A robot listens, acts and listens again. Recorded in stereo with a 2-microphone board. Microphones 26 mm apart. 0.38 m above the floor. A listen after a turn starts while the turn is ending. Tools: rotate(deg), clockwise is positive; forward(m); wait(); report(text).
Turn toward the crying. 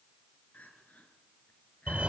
rotate(-90)
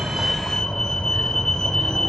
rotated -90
wait()
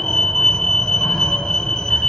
wait()
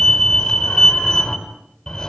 report("Facing where the crying came from. I can't hear it now.")